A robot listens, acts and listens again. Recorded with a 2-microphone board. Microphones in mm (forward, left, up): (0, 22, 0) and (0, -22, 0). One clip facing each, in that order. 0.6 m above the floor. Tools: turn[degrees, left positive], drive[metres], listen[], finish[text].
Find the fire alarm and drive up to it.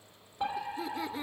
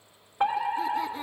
Thought: The fire alarm: about 60° right or 120° right.
Action: turn[-60]
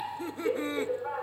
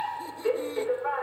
Thought: So it is at 40° right.
Action: turn[-40]
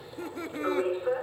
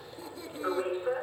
Action: drive[1.0]
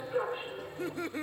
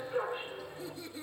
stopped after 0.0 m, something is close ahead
Action: finish[Blocked. The fire alarm is further on, straight ahead.]